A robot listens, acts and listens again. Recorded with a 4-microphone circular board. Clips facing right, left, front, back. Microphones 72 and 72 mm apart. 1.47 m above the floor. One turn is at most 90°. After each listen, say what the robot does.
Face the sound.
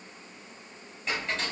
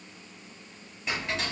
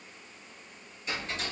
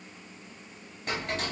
Turn 90° left.
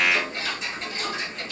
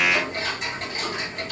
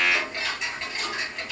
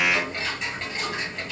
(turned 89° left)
Turn 90° left.
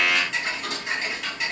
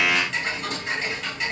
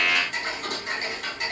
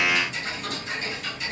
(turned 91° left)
Found it: ticking, straight ahead, 2 to 4 m away.